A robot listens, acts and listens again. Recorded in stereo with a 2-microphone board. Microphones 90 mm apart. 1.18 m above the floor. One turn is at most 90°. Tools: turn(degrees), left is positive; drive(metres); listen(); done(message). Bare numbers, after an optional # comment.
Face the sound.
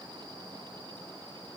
listen()
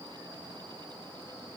listen()
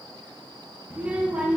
# The child speaking: about 15° right or 165° right.
turn(-15)
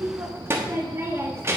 # So it is at 155° right.
turn(-90)
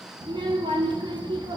# The child speaking is now 60° right.
turn(-60)
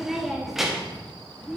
done("Found it: a child speaking, straight ahead.")